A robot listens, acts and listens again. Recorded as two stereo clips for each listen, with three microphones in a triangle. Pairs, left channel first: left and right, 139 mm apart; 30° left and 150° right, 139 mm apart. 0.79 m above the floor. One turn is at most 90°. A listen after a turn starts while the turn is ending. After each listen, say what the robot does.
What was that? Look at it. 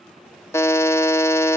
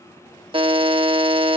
Turn 90° left.
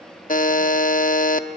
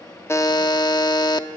Turn 90° left.
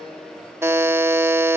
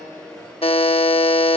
Turn 20° right.
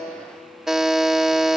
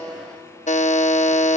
Facing the buzzer, under 1 m away.